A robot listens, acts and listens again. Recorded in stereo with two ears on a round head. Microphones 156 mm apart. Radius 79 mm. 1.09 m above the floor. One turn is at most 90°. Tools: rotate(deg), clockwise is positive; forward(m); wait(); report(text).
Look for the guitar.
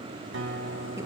rotate(90)
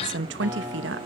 rotate(10)
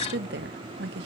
wait()
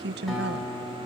report("Facing the guitar.")